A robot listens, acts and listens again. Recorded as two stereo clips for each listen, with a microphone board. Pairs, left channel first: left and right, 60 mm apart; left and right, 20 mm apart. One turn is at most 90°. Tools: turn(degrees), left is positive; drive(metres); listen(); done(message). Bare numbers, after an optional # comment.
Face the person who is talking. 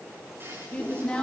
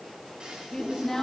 # The woman speaking: about 20° left or 160° left.
turn(20)
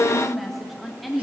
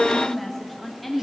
done("Facing the woman speaking.")